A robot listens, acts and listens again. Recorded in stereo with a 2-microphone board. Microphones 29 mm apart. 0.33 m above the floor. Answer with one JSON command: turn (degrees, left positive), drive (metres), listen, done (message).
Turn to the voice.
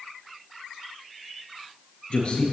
{"turn": 45}
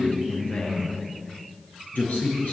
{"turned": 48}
{"turn": 90}
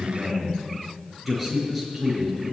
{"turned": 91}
{"done": "Found it: a man speaking, straight ahead."}